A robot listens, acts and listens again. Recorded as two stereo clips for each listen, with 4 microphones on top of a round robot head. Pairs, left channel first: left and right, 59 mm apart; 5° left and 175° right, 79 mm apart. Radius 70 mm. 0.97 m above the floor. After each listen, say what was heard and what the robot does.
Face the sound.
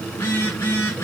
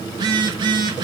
The phone buzzing: 155° left. Turn 155° left.
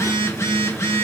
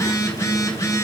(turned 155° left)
The phone buzzing is now 55° left. Turn 55° left.
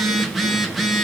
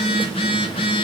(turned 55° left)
Found it: a phone buzzing, straight ahead.